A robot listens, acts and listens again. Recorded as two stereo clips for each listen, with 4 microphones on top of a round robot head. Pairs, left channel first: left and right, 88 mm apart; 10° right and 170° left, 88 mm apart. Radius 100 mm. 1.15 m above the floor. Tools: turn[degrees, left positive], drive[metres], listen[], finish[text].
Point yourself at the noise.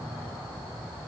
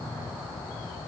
Action: listen[]
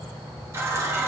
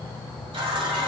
Thought: The running tap: 150° right.
Action: turn[-150]
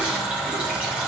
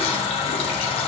Thought: The running tap is now 10° right.
Action: turn[-10]
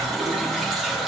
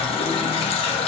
Action: finish[Found it: a running tap, straight ahead.]